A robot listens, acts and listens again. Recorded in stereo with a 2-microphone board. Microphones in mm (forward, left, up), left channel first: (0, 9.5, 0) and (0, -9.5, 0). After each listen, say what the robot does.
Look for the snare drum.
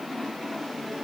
Keep listening.
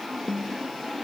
Turn 90° left.
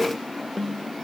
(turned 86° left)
Turn 10° left.
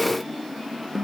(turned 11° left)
Found it: a snare drum, straight ahead.